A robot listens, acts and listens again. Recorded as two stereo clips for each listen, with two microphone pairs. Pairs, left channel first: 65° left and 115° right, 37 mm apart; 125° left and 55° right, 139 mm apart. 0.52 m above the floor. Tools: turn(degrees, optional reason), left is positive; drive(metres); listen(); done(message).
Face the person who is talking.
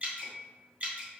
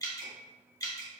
listen()
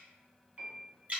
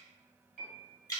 listen()
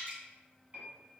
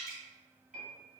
done("I can't make out anyone speaking to turn to.")